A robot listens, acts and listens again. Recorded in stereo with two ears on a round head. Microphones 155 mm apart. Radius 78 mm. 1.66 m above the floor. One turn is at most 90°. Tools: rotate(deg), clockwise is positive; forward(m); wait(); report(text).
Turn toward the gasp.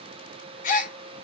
rotate(-45)
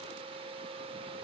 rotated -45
wait()
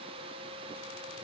report("I heard a gasp, but can't make it out now. It was about straight ahead or 90° left.")